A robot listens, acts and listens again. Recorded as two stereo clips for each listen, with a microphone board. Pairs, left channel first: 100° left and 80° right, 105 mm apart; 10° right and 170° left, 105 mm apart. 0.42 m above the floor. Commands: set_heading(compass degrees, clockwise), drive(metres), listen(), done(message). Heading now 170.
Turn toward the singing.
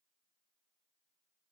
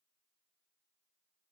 listen()
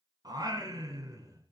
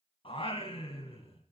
set_heading(195)
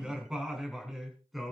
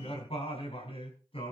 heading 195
set_heading(185)
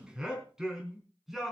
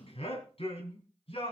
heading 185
set_heading(175)
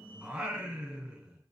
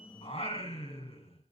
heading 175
done("Facing the singing, 2 to 4 m away.")